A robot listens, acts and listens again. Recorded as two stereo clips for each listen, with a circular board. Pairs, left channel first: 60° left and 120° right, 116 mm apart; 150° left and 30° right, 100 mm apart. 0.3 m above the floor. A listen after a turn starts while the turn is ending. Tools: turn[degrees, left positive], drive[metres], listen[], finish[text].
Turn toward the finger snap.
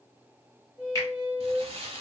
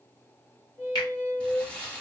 Thought: The finger snap: 115° left.
Action: turn[115]
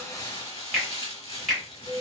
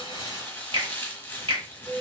Thought: The finger snap is now 25° right.
Action: turn[-25]
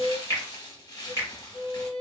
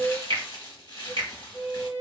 Action: finish[Facing the finger snap, 1 to 2 m away.]